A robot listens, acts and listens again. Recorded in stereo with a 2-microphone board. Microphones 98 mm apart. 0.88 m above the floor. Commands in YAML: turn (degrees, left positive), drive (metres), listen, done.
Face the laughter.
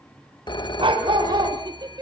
turn: -50
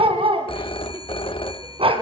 listen: true
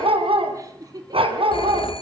turn: -40
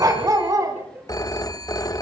turn: -25
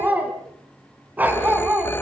listen: true
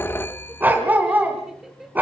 done: "Facing the laughter, 2 to 4 m away."